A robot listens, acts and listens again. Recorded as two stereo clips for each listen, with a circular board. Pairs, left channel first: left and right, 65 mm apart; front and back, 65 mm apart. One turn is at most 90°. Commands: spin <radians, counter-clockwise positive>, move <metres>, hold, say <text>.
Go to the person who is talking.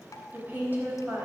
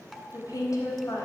spin -0.52
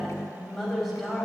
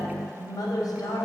move 1.0
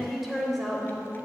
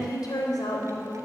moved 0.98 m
move 1.0
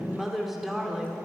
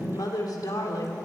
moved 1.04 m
move 1.0
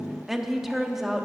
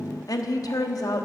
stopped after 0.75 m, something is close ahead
say Arrived at the woman speaking, straight ahead.